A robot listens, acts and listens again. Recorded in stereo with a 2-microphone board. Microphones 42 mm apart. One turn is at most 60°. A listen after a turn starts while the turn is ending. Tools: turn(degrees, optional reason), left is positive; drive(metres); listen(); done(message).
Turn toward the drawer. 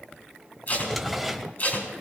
turn(degrees=30)
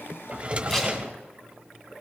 turn(degrees=-30, reason="So it is at 30° right.")
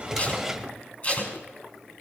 turn(degrees=-10, reason="The drawer is now 10° right.")
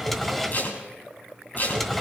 done("Facing the drawer, 1 to 2 m away.")